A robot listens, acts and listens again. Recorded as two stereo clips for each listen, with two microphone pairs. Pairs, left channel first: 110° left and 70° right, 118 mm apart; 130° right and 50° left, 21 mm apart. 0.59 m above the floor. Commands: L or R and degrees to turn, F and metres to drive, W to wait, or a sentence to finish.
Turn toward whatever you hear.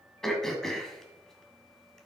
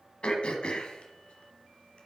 R165
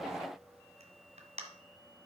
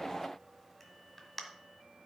R50
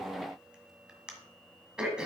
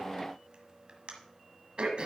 L10
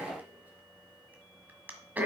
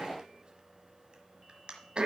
Found it: throat clearing, straight ahead.